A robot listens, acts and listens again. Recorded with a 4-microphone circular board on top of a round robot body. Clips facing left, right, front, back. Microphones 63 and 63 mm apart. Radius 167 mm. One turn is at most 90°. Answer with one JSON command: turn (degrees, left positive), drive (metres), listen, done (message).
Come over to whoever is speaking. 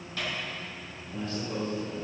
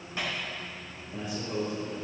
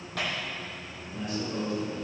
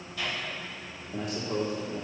{"turn": -90}
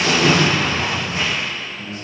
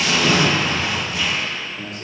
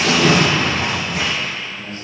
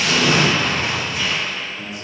{"turn": -90}
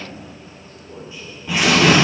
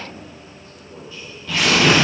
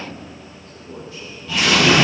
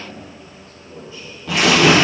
{"turn": 20}
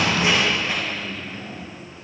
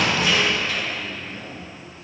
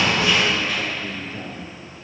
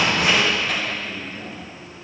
{"drive": 1.0}
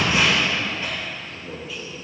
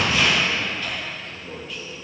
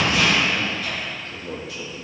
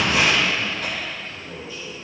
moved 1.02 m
{"drive": 1.0}
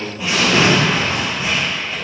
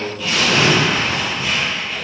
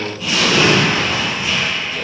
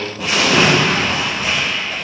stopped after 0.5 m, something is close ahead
{"done": "I am next to the man speaking."}